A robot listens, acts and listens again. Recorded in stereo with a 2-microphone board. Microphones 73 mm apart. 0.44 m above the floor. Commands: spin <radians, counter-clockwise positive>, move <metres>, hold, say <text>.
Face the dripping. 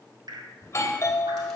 spin -1.57
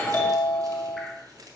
hold
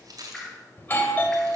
say Found it: dripping, straight ahead, 1 to 2 m away.